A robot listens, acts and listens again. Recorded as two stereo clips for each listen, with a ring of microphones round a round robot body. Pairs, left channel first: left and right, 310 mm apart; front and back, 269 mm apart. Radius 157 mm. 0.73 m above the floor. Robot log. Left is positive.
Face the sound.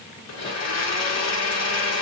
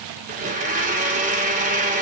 note: The blender: 120° left.
cmd yaw +120
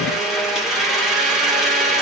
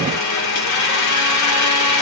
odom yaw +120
end: Found it: a blender, straight ahead.